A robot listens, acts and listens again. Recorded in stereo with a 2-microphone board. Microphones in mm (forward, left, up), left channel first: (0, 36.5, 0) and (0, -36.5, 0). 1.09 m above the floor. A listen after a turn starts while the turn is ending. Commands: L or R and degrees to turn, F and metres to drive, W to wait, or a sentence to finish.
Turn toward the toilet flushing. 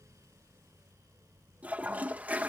R20
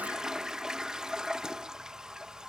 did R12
R10
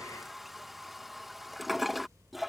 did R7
Facing the toilet flushing.